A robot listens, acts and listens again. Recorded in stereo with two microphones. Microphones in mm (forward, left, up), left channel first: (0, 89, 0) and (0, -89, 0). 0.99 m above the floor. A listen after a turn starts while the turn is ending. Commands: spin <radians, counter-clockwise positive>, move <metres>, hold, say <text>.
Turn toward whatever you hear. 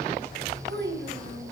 spin -1.57
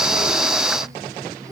hold
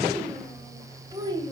spin -0.44
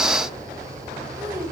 spin -0.26
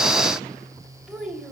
say Facing the child speaking, 2 to 4 m away.